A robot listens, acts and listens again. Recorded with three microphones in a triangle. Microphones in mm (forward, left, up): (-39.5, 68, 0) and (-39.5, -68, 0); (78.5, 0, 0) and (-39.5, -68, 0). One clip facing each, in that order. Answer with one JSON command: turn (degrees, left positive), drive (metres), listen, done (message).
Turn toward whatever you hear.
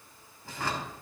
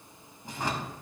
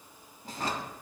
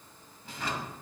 {"turn": -20}
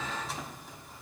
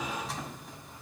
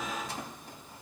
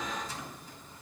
{"done": "Facing the drawer."}